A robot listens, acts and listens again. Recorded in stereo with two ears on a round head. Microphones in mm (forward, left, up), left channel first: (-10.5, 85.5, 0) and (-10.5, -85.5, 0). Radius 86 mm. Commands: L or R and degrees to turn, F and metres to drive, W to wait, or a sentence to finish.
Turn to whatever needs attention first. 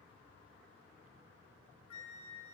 W
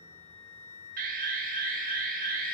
R45
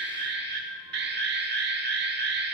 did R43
R80
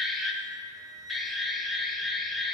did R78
Facing the alarm.